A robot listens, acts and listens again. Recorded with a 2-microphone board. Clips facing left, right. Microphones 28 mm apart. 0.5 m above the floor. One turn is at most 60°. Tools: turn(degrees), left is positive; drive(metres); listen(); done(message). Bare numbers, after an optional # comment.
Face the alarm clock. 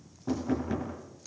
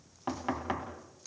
listen()
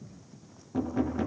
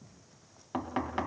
listen()
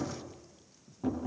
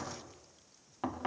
done("I can't make out an alarm clock, only knocking.")